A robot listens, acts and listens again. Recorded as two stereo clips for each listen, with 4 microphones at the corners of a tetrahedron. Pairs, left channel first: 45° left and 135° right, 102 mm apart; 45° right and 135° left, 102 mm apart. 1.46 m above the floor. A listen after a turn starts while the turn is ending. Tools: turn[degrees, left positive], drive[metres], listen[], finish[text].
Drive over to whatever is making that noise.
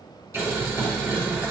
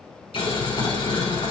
Thought: The boiling: 70° right.
Action: turn[-70]
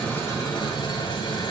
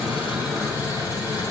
Action: drive[1.0]
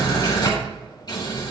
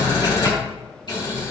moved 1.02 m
Action: drive[1.0]
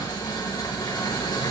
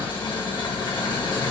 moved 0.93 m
Action: drive[1.0]
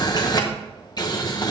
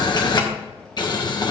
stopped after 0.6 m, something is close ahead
Action: finish[I am next to the boiling.]